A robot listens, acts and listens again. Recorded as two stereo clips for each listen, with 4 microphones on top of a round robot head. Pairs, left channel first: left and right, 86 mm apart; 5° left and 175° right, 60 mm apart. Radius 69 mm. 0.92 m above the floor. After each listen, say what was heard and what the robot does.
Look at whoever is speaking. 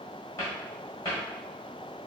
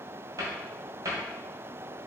Keep listening.
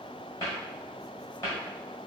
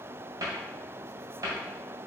Keep listening.
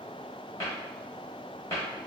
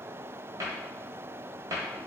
I can't make out anyone speaking to turn to.